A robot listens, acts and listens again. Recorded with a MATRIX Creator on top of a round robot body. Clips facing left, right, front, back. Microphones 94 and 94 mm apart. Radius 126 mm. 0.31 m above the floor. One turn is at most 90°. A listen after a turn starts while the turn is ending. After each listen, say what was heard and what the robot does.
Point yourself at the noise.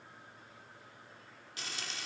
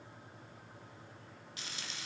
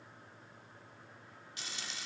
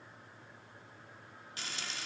The frying: 140° left. Turn 90° left.
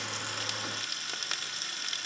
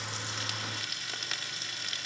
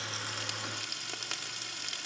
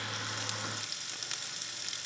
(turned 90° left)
The frying is now 35° left. Turn 35° left.
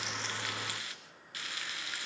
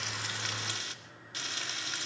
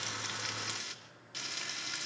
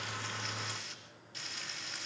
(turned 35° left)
The frying is now 25° right. Turn 25° right.
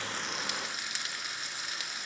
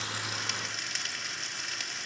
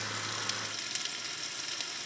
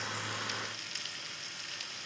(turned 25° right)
The frying is now 10° left. Turn 10° left.
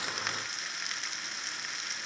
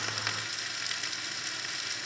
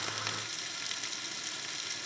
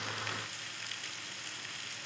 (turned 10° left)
Found it: frying, straight ahead.